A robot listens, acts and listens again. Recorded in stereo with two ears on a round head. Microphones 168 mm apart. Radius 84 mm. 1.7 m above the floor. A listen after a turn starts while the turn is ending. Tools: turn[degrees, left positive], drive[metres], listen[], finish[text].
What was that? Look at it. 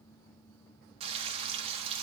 Thought: The frying: about 35° right or 145° right.
Action: turn[-35]
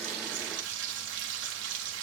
Thought: So it is at 110° right.
Action: turn[-110]
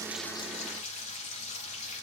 Thought: The frying is now 40° left.
Action: turn[40]
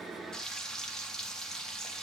Action: finish[Facing the frying.]